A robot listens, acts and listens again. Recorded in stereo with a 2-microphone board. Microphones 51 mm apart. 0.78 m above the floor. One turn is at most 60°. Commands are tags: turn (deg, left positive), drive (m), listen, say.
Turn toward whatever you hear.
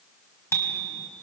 <turn deg="55"/>
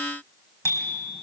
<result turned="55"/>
<turn deg="60"/>
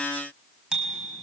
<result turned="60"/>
<turn deg="-10"/>
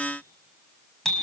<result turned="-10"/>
<say>Found it: a bicycle bell, straight ahead.</say>